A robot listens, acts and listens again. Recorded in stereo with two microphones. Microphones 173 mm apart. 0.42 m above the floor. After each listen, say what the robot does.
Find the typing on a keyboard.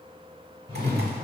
Keep listening.
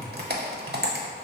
Turn 70° right.
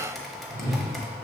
Facing the typing on a keyboard, under 1 m away.